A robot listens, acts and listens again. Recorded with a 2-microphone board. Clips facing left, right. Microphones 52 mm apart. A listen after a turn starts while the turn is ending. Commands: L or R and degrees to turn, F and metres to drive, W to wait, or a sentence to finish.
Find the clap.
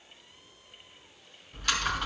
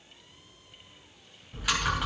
W
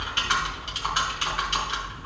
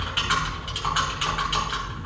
W
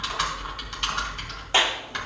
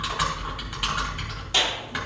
L30
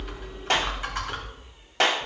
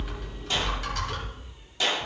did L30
L120
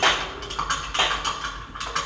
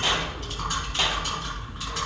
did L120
W
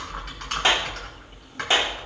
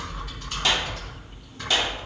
L30
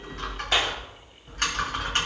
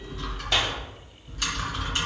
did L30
W
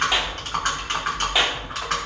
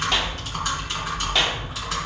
W
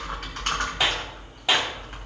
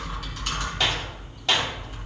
L10
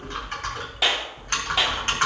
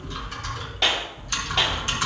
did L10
Found it: a clap, straight ahead.